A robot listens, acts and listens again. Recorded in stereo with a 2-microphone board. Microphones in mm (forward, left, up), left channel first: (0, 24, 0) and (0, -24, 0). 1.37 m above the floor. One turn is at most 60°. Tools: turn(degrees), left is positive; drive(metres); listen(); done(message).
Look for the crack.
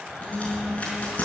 turn(degrees=30)
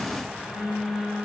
listen()
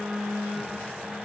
done("I heard a crack, but can't make it out now. It was about straight ahead or 120° left.")